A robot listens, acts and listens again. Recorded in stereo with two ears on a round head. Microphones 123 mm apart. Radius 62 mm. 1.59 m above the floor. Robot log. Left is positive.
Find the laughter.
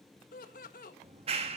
note: The laughter: about 65° left or 115° left.
cmd yaw +65
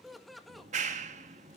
end: Facing the laughter, 1 to 2 m away.